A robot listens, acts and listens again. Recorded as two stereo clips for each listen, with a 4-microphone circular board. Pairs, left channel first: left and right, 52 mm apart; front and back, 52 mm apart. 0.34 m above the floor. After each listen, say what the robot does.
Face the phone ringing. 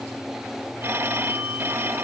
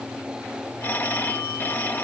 Turn 45° right.
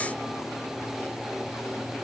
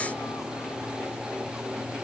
Keep listening.
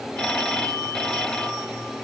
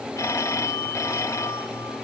Turn 20° left.
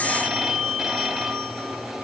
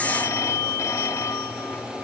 Found it: a phone ringing, straight ahead.